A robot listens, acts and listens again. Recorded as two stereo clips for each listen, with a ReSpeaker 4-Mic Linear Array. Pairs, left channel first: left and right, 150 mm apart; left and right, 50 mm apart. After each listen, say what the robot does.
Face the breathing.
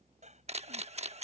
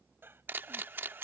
Turn 50° right.
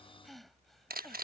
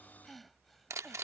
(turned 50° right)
Facing the breathing.